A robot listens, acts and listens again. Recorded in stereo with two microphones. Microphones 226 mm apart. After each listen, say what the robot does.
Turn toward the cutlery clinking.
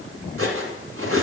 Turn 90° right.
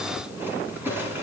Turn 10° right.
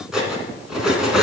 Facing the cutlery clinking, 2 to 4 m away.